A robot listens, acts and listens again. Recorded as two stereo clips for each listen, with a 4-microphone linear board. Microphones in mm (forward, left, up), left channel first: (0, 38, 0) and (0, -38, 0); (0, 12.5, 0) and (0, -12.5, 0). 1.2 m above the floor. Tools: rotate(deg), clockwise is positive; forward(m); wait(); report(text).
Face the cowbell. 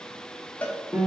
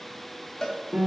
rotate(-15)
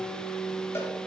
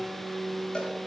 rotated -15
wait()
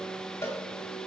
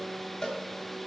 rotate(-150)
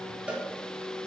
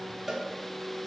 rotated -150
rotate(15)
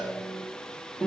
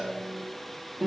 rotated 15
wait()
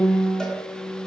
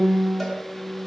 wait()
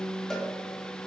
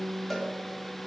report("I heard a cowbell from this way, but can't make it out now.")